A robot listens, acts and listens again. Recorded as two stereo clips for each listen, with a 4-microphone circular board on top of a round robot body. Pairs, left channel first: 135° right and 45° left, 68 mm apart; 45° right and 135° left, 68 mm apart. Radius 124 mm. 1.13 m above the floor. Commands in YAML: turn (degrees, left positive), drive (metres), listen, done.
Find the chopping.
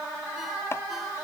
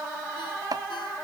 turn: 170
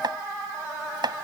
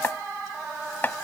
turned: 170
turn: 20
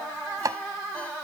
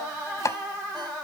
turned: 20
done: "Found it: chopping, straight ahead."